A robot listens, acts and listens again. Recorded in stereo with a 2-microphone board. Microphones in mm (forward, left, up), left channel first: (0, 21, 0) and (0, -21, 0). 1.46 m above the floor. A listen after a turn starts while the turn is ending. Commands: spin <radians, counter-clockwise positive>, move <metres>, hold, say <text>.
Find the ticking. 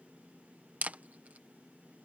hold
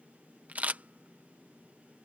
hold
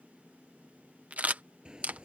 spin -0.35
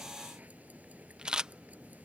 spin -2.44
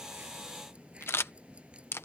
spin -0.52
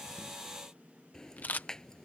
spin 0.26
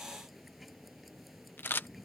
say Found it: ticking, straight ahead.